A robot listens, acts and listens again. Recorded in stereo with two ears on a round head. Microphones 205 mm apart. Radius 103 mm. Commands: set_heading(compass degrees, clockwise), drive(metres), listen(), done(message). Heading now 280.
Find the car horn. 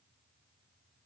listen()
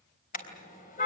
set_heading(245)
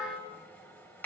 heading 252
listen()
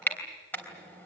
set_heading(242)
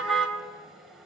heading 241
done("Facing the car horn, 2 to 4 m away.")